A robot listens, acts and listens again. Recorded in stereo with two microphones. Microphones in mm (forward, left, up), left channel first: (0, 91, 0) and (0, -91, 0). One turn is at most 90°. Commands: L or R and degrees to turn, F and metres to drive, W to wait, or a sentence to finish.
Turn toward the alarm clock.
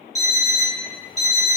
L35
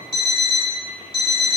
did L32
L90
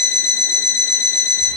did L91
L15
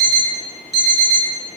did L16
Found it: an alarm clock, straight ahead, 1 to 2 m away.